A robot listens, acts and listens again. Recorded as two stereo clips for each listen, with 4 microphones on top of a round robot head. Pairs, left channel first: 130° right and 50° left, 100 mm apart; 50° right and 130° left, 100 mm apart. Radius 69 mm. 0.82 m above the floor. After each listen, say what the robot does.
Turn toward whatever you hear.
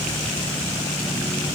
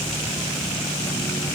Keep listening.
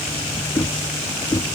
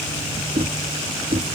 Turn 165° left.
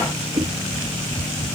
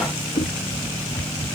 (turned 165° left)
Facing the knocking.